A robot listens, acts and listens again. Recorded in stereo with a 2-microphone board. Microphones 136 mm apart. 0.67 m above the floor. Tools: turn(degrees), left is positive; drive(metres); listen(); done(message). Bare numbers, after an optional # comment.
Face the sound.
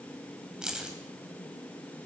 turn(-30)
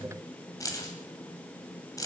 # So it is at 25° left.
turn(25)
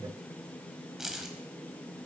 done("Found it: keys jangling, straight ahead, 2 to 4 m away.")